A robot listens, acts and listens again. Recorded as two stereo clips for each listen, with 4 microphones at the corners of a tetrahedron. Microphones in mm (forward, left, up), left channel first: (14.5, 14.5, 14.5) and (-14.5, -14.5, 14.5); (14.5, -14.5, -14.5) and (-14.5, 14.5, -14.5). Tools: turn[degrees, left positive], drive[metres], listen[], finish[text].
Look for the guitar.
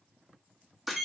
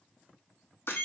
Action: listen[]
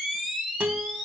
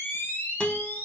Thought: The guitar: 105° right.
Action: turn[-105]
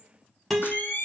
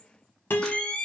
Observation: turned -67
Thought: The guitar is now 40° right.
Action: turn[-40]
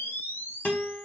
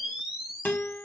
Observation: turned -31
Action: finish[Facing the guitar.]